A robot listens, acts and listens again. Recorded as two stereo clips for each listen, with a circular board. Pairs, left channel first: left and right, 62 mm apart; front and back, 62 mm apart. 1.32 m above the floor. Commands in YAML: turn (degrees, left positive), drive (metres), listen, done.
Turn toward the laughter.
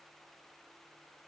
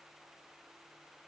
listen: true
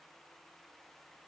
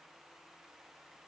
listen: true
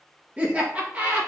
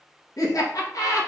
turn: -25
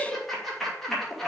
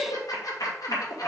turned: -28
done: "Facing the laughter, 2 to 4 m away."